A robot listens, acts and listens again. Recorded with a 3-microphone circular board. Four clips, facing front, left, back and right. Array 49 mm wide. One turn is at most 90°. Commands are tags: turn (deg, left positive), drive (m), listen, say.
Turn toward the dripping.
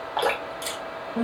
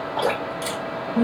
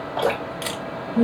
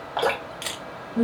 <turn deg="-40"/>
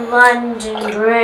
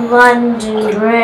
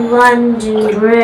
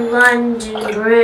<listen/>
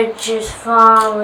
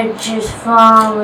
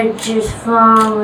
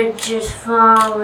<listen/>
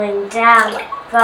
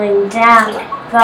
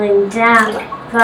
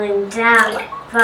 <turn deg="-15"/>
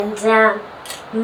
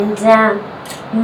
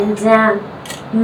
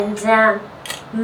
<listen/>
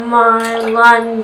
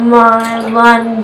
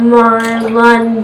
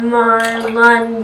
<listen/>
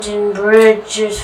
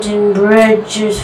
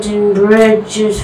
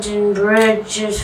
<say>Facing where the dripping came from. I can't hear it now.</say>